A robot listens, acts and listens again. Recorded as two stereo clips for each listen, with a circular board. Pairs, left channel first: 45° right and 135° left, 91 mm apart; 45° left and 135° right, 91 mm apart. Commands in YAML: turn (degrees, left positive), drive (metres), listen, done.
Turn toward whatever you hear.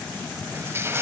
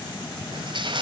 turn: -160
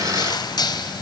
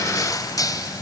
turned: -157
done: "Facing the crushing."